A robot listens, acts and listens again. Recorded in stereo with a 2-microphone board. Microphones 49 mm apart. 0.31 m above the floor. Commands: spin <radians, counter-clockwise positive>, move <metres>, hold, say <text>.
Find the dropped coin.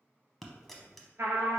spin 0.52
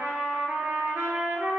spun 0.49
hold
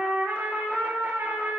say I heard a dropped coin, but can't make it out now. It was about 25° right or 150° left.